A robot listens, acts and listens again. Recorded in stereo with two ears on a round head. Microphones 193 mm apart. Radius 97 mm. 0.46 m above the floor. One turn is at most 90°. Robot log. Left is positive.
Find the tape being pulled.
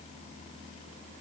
cmd idle
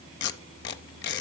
note: The tape being pulled: about 50° left or 130° left.
cmd yaw +50
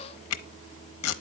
note: So it is at 80° left.
cmd yaw +80
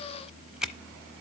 end: Facing the tape being pulled.